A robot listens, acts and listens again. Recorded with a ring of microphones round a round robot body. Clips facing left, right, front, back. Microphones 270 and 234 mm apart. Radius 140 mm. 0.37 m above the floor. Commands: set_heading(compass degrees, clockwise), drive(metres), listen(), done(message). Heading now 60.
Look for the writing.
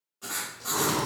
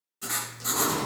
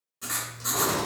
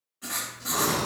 set_heading(100)
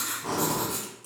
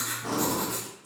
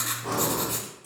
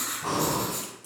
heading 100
done("Facing the writing, under 1 m away.")